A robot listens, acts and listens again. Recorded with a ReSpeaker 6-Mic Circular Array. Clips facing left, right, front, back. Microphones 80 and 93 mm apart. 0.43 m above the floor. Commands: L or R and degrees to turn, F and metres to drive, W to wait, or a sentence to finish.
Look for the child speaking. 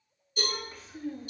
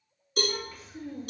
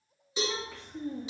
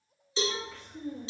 L35
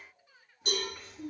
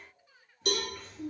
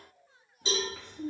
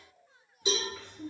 L15
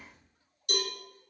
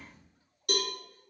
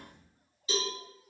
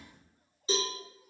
W
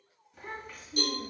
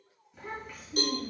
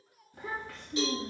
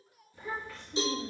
Found it: a child speaking, straight ahead, 2 to 4 m away.